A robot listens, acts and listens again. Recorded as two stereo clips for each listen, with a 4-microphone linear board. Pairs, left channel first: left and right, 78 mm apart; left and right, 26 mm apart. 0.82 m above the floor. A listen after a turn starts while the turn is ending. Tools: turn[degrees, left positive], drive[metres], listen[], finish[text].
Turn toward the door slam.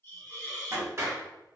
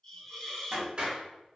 Thought: The door slam: about 40° right or 140° right.
Action: turn[-40]
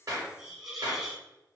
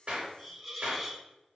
Action: listen[]
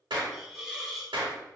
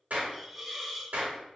Action: finish[I heard a door slam, but can't make it out now. It was about straight ahead or 100° right.]